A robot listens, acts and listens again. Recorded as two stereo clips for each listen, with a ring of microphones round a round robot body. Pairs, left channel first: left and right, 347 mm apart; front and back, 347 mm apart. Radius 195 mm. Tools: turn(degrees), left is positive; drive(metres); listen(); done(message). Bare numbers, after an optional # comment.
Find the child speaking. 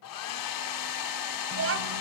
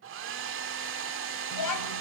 # The child speaking: 35° right.
turn(-35)
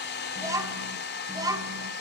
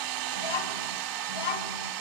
# The child speaking is now 10° right.
turn(-10)
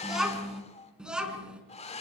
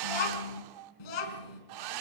done("Facing the child speaking.")